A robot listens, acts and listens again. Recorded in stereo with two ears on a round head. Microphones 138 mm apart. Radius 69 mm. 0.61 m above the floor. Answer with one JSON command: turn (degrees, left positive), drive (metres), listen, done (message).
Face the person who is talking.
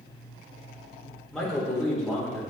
{"turn": 30}
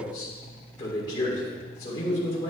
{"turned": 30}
{"turn": 150}
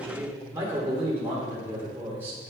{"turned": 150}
{"turn": -20}
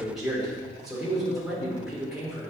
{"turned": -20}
{"done": "Facing the man speaking."}